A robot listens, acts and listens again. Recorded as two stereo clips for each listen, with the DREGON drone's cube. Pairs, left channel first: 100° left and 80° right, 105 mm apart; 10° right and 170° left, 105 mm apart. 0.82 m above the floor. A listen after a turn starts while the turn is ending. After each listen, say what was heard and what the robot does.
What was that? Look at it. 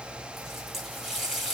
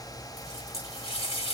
The running tap: 10° left. Turn 10° left.
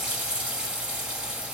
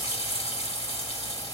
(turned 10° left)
Facing the running tap, 1 to 2 m away.